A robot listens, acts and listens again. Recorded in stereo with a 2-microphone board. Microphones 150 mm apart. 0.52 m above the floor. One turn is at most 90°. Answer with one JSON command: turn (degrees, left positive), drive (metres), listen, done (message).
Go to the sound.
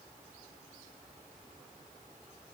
{"listen": true}
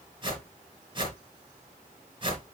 {"turn": -35}
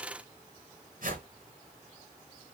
{"turn": -90}
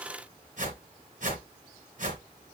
{"turn": -60}
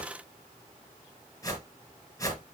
{"turn": 25}
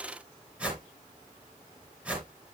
{"turn": -10}
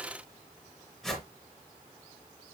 {"drive": 1.0}
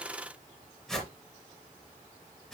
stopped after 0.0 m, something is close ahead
{"done": "Blocked. The whoosh is further on, straight ahead."}